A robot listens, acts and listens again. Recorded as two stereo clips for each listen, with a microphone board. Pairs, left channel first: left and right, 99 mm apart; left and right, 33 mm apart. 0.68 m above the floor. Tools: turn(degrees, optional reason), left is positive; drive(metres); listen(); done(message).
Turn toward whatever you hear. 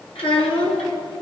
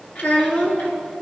turn(degrees=90)
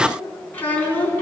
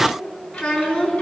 turn(degrees=20, reason="So it is at 20° left.")
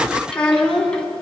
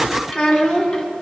turn(degrees=10, reason="The child speaking is now 10° left.")
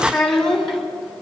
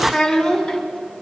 done("Found it: a child speaking, straight ahead, 2 to 4 m away.")